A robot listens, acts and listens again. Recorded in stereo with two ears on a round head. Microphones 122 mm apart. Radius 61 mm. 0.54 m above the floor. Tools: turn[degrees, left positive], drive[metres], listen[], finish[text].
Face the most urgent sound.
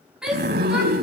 Action: turn[-30]
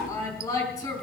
Thought: So it is at 25° left.
Action: turn[25]
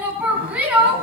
Thought: The shout is now 10° right.
Action: turn[-10]
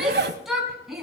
Action: finish[Found it: a shout, straight ahead.]